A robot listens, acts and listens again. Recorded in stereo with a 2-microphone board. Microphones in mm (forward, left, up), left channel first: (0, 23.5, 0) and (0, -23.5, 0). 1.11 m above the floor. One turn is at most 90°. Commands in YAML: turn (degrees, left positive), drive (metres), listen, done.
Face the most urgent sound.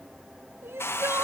turn: -60
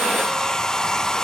listen: true
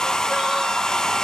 listen: true
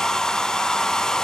done: "I heard crying, but can't make it out now. It was about straight ahead or 60° right."